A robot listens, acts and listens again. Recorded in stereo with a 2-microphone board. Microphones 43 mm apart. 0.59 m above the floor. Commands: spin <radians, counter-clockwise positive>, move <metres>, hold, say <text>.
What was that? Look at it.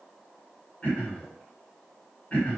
spin 0.52
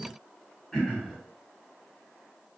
spin 0.17
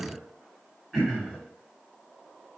say Facing the throat clearing.